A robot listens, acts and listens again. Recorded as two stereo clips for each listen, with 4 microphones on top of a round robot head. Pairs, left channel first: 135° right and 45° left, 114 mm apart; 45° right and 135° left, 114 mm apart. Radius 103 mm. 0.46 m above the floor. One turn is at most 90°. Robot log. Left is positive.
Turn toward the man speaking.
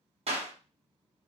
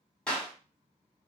cmd idle
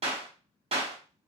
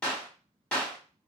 cmd idle
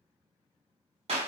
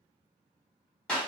end: I can't make out a man speaking to turn to.